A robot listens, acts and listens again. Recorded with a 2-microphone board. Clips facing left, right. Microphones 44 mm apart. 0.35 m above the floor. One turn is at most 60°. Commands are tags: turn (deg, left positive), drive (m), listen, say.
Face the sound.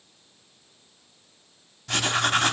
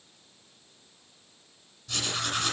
<turn deg="60"/>
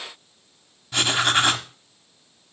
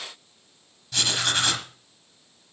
<turn deg="25"/>
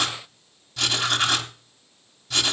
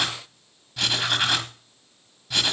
<turn deg="-10"/>
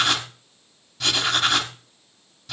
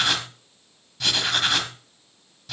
<say>Facing the writing, 1 to 2 m away.</say>